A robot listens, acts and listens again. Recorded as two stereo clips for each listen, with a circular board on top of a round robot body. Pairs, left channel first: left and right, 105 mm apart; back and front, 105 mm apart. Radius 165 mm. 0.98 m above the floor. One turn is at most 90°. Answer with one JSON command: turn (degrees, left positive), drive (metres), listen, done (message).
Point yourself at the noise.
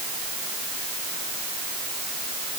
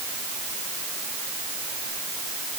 {"listen": true}
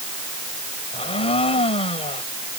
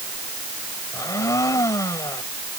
{"turn": 90}
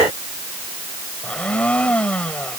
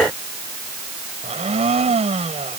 {"turn": 10}
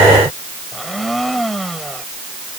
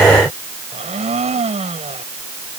{"done": "Facing the blender."}